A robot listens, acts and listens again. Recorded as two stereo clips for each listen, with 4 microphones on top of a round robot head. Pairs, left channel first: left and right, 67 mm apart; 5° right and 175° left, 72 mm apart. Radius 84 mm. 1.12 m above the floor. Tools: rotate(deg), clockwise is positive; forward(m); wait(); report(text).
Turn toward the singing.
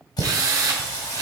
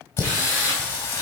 rotate(-45)
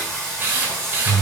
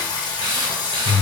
rotate(-20)
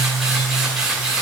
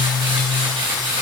report("Facing the singing.")